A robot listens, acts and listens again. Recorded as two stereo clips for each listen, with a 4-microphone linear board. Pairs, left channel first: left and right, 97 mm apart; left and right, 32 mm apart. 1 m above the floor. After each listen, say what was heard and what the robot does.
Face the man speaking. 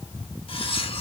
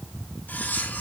Keep listening.
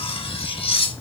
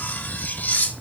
Keep listening.
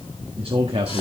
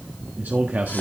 Turn 90° right.
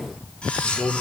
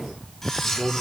So it is at 30° left. Turn 30° left.
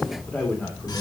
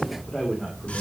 The man speaking is now 10° left. Turn 10° left.
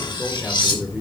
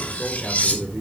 Found it: a man speaking, straight ahead, 2 to 4 m away.